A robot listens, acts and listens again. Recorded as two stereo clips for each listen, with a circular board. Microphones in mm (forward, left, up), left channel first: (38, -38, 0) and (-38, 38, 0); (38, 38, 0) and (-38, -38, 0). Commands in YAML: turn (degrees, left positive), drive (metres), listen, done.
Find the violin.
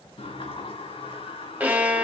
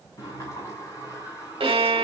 turn: -155
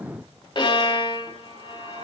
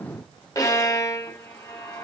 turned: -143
turn: -10
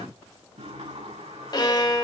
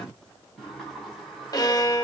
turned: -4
done: "Found it: a violin, straight ahead."